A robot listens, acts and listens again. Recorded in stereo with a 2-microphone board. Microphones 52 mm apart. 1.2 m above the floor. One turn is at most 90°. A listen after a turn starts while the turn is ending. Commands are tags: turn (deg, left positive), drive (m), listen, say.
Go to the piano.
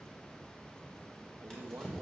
<listen/>
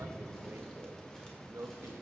<listen/>
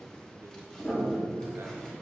<turn deg="15"/>
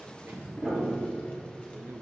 <drive m="1.0"/>
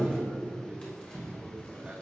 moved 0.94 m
<drive m="1.0"/>
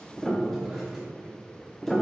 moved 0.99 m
<drive m="1.0"/>
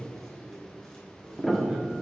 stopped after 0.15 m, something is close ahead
<say>Arrived at the piano, straight ahead.</say>